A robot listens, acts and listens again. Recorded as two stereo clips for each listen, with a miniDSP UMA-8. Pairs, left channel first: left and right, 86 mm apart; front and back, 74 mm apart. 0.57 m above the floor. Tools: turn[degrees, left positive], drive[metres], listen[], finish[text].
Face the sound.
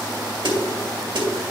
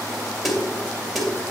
Thought: The snare drum: 90° right.
Action: turn[-90]
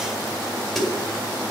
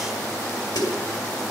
Action: finish[Facing the snare drum.]